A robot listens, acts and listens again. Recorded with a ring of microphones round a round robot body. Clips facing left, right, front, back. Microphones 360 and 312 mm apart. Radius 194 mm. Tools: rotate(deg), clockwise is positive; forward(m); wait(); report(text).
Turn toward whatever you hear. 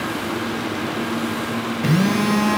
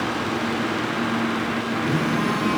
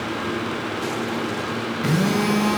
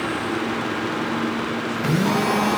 rotate(-85)
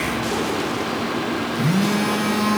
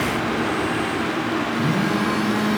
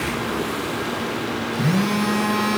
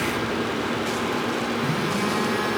rotate(-30)
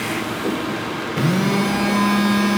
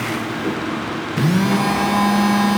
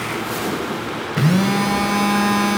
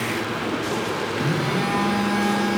rotate(10)
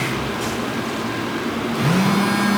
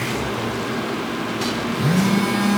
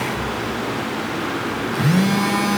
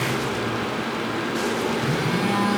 report("Facing the phone buzzing, 2 to 4 m away.")